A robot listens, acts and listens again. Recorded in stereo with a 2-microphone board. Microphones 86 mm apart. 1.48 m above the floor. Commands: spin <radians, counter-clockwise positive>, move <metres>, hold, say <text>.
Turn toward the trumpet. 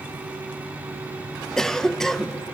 hold
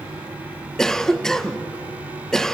hold
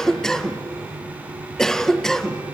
say I can't make out a trumpet to turn to.